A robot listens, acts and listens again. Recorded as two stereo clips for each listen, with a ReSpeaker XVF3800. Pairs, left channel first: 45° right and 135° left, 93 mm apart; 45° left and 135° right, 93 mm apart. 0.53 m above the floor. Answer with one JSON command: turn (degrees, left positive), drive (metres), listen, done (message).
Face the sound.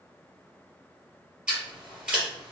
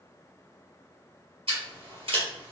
{"turn": -145}
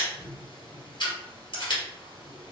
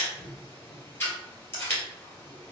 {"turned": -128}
{"turn": -15}
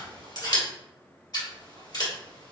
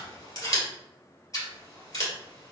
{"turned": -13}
{"done": "Facing the scissors."}